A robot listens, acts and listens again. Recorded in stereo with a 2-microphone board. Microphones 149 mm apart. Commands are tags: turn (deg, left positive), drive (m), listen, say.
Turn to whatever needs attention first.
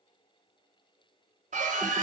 <turn deg="-55"/>
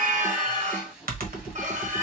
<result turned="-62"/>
<turn deg="-60"/>
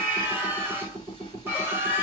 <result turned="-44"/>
<turn deg="-15"/>
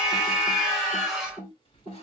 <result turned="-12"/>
<say>Found it: a scream, straight ahead.</say>